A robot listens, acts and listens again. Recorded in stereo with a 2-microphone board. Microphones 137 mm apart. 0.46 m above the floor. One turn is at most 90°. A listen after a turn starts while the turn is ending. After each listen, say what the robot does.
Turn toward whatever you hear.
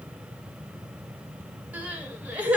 Turn 30° right.
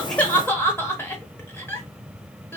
Turn 20° left.
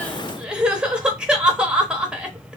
Found it: crying, straight ahead.